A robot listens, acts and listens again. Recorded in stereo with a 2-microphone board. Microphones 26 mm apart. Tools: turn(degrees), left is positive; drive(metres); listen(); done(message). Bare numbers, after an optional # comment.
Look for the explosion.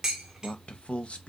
listen()
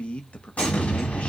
# The explosion: about 65° left or 115° left.
turn(65)
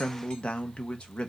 listen()
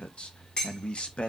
done("I heard an explosion, but can't make it out now. It was about straight ahead or 50° left.")